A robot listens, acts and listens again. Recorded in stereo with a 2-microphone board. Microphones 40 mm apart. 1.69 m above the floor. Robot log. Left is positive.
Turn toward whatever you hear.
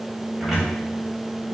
cmd yaw -30
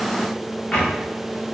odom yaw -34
note: So it is at 25° left.
cmd yaw +25
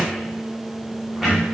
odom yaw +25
end: Facing the cupboard door.